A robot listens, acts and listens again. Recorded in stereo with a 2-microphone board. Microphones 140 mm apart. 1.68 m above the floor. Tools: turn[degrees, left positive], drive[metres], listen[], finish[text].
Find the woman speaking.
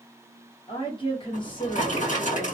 Thought: The woman speaking: about 35° left or 145° left.
Action: turn[35]
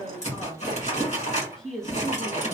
Action: finish[Facing the woman speaking.]